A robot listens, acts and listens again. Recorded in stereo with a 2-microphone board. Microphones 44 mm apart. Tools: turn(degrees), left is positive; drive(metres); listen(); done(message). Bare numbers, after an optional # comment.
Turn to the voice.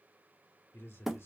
# The man speaking: about 75° left or 105° left.
turn(75)
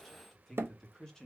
# So it is at 20° left.
turn(20)
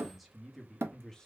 # The man speaking is now 15° left.
turn(15)
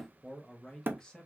# The man speaking is now 20° left.
turn(20)
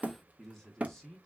# The man speaking is now 10° left.
turn(10)
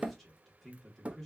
done("Found it: a man speaking, straight ahead, 1 to 2 m away.")